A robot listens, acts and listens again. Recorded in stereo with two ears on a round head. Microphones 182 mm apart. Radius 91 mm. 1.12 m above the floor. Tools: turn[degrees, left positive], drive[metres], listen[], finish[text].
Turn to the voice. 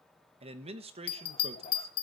Thought: The man speaking: about 30° right or 150° right.
Action: turn[-30]
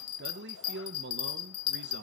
Thought: So it is at 115° right.
Action: turn[-115]
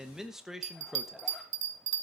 Action: finish[Facing the man speaking, 1 to 2 m away.]